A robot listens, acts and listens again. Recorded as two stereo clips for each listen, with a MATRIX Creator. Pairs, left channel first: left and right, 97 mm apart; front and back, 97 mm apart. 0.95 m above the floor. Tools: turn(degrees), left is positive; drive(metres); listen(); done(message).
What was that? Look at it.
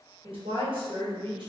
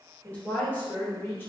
turn(degrees=-65)
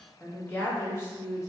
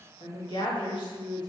turn(degrees=35)
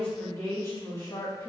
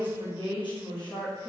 turn(degrees=40)
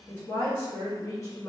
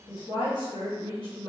turn(degrees=30)
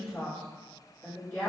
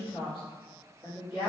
turn(degrees=20)
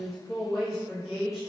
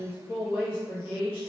done("Facing the woman speaking.")